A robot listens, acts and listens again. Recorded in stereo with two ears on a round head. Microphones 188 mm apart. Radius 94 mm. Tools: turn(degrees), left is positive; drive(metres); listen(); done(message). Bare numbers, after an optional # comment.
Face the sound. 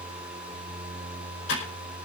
# The typing on a keyboard: about 60° left or 120° left.
turn(60)
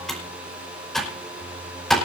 done("Found it: typing on a keyboard, straight ahead, over 4 m away.")